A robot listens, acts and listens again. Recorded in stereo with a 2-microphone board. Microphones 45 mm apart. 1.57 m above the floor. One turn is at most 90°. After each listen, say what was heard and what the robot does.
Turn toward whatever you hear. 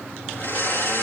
The blender: about 55° left or 125° left. Turn 55° left.
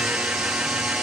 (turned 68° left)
So it is at 10° right. Turn 10° right.
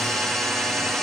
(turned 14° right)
Facing the blender, 1 to 2 m away.